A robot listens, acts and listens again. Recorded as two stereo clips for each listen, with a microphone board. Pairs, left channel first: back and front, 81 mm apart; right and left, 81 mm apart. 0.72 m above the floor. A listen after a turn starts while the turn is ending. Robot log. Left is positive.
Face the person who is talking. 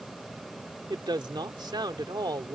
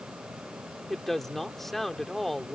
end: Found it: a woman speaking, straight ahead.